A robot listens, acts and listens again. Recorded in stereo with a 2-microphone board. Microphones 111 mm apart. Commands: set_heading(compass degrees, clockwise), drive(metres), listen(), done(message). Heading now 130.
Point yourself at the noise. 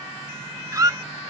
set_heading(160)
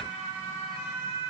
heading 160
listen()
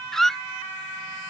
done("Found it: a squeak, straight ahead.")